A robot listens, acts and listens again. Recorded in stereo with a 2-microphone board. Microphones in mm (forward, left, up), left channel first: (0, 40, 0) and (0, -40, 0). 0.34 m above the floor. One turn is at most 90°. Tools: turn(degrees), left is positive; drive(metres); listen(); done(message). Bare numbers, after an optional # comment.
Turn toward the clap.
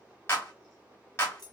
# The clap: about 35° left or 145° left.
turn(35)
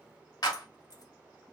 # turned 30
# So it is at 110° left.
turn(90)
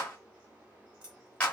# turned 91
# The clap is now 20° left.
turn(20)
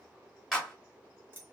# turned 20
done("Facing the clap, 1 to 2 m away.")